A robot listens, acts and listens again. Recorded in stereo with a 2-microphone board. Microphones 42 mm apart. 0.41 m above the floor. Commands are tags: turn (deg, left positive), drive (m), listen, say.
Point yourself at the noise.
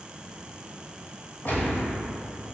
<turn deg="45"/>
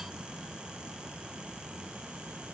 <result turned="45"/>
<listen/>
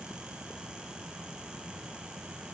<say>I heard a gunshot, but can't make it out now. It was about straight ahead or 90° left.</say>